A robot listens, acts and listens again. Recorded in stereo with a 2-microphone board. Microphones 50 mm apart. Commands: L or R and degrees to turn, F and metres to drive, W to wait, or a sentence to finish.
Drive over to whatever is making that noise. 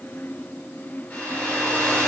L30
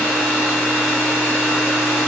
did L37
F1.0
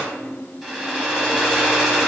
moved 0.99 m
R10
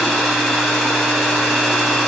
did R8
F1.0
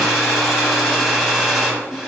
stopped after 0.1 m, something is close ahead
I am next to the hair dryer.